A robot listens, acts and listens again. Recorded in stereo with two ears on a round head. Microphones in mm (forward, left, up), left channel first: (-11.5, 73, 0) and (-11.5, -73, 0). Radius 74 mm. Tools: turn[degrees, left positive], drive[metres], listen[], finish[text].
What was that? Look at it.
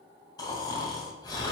Thought: The snoring: about 25° left or 155° left.
Action: turn[25]
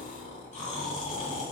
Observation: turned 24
Thought: So it is at 125° left.
Action: turn[125]
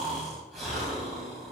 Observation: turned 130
Action: finish[Found it: snoring, straight ahead.]